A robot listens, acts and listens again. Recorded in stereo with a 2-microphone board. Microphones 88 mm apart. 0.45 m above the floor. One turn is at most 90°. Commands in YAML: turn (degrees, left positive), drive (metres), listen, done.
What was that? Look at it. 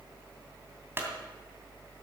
turn: -25
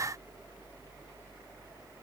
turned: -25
listen: true
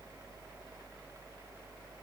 done: "I heard a clunk, but can't make it out now. It was about straight ahead or 130° right."